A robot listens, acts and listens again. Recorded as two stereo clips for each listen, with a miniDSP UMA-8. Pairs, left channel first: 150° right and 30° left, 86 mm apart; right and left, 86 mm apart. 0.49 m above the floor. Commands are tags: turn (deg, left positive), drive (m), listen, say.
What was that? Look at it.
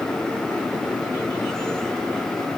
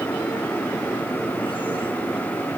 <listen/>
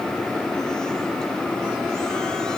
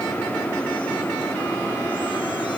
<listen/>
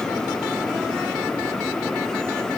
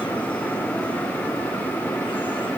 <say>I can't make out anything to turn to.</say>